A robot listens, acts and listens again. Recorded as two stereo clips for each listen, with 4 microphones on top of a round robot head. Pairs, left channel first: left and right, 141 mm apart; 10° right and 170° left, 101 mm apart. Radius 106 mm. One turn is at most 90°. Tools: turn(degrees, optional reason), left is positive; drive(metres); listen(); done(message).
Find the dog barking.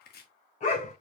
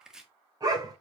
turn(degrees=90, reason="The dog barking: 120° left.")
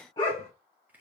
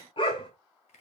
turn(degrees=25, reason="The dog barking is now 25° left.")
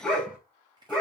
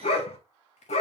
done("Found it: a dog barking, straight ahead, 2 to 4 m away.")